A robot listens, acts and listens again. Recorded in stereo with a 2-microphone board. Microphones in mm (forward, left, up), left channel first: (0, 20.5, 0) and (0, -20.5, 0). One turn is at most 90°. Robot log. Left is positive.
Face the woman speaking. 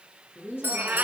cmd yaw +90
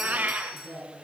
end: Facing the woman speaking, over 4 m away.